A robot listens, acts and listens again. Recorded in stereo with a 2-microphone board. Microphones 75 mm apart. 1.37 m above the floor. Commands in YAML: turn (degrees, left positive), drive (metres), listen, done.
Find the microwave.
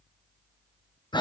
listen: true
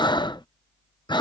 listen: true
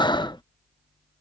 done: "I can't make out a microwave, only breathing."